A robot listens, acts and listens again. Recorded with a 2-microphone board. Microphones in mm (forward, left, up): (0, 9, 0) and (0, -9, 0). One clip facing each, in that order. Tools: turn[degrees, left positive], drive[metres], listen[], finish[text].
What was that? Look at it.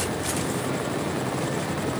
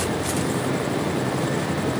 Action: listen[]
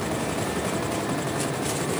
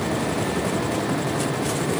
Action: listen[]
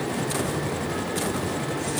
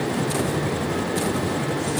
Action: finish[I can't make out anything to turn to.]